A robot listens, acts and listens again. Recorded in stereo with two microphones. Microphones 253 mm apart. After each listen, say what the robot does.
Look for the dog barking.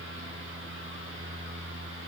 Keep listening.
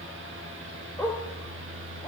Turn 30° left.
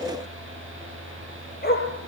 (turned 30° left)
Turn 140° left.
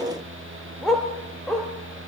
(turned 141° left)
Facing the dog barking.